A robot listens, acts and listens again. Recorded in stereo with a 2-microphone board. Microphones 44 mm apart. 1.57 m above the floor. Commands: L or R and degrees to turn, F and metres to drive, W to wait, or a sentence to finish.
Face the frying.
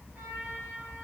W
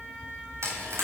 R90
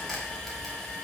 W
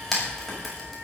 L10
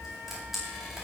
W
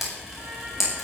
Found it: frying, straight ahead.